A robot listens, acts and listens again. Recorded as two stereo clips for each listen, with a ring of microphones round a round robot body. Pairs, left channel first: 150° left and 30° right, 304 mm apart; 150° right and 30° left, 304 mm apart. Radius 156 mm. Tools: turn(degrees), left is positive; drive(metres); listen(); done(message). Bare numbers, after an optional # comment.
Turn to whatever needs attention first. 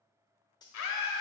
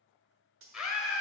# The scream: 120° left.
turn(120)
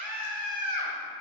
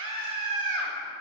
done("Found it: a scream, straight ahead, 1 to 2 m away.")